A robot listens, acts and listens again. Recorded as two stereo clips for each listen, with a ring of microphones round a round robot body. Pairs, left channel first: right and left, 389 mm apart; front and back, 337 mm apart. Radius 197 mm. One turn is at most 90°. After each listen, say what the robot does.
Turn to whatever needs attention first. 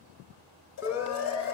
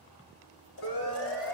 Found it: a siren, straight ahead.